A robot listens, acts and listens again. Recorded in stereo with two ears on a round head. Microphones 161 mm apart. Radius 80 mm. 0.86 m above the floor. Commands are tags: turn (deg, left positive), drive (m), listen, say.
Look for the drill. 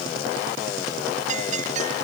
<listen/>
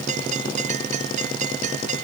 <listen/>
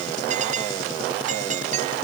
<say>I can't make out a drill to turn to.</say>